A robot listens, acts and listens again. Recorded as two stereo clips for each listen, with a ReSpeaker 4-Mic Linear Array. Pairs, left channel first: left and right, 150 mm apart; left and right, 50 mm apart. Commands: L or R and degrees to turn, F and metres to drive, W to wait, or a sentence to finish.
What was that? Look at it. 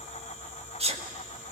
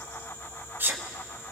R40
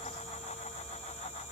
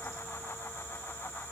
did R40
W
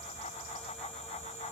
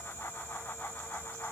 I heard a sneeze, but can't make it out now. It was about straight ahead or 100° right.